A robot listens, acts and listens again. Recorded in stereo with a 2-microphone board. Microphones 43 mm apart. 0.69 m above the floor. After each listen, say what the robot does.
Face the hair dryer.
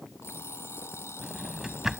Keep listening.
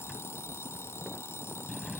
Keep listening.
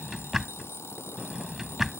I can't make out a hair dryer to turn to.